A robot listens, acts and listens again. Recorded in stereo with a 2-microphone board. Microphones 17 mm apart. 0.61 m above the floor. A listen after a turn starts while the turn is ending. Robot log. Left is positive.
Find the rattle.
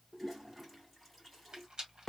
note: The rattle: about 60° right or 120° right.
cmd yaw -60
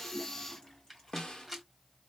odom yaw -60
end: Facing the rattle, 1 to 2 m away.